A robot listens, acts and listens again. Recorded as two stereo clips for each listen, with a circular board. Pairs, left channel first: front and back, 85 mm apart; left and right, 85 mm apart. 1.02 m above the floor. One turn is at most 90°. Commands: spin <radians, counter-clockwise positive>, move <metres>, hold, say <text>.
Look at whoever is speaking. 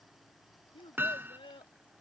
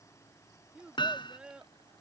spin -0.17
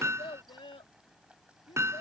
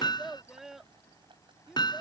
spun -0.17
say Found it: a child speaking, straight ahead.